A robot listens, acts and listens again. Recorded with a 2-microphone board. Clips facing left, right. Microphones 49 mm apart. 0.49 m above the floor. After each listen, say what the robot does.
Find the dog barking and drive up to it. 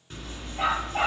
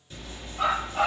Turn 40° left.
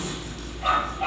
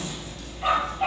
Drive 1.0 m forward.
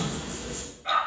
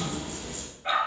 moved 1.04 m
Turn 10° right.
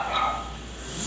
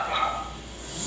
Drive 1.0 m forward.
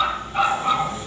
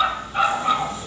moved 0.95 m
Drive 1.0 m forward.
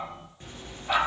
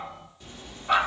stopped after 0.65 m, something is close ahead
I am next to the dog barking.